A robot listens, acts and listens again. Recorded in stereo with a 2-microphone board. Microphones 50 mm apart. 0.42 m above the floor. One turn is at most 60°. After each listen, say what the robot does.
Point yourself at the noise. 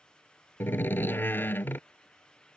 Turn 50° left.
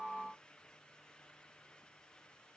Keep listening.
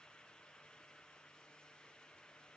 I heard a door slam, but can't make it out now. It was about straight ahead or 80° left.